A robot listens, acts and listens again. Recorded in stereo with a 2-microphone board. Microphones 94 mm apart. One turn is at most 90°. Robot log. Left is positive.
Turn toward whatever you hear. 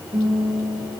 note: The guitar: about 60° right or 120° right.
cmd yaw -60
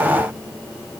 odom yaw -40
cmd idle
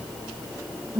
note: So it is at 80° right.
cmd yaw -80
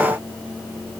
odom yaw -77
cmd idle
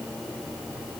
cmd idle
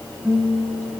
end: Facing the guitar.